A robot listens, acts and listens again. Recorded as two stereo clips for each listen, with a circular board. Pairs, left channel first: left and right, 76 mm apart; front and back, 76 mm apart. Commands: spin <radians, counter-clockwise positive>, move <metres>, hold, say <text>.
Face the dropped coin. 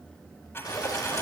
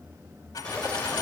spin 0.52
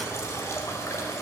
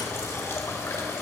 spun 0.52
say I heard a dropped coin from this way, but can't make it out now.